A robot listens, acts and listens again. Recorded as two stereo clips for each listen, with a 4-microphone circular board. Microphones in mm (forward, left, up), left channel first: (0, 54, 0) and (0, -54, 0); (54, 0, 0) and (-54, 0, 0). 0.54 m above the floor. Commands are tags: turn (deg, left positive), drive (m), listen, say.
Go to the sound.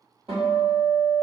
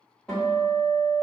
<turn deg="-80"/>
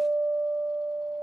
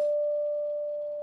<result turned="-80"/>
<turn deg="10"/>
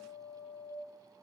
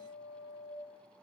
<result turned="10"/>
<drive m="1.0"/>
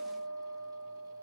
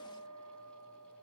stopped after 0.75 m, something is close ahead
<say>Arrived at the guitar, straight ahead.</say>